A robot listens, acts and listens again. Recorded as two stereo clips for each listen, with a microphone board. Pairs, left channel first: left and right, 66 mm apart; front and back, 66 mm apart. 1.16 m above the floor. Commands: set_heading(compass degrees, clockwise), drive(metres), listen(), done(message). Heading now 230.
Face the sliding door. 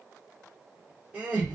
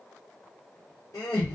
listen()
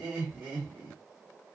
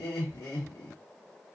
listen()
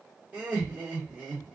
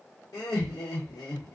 done("I can't make out a sliding door, only laughter.")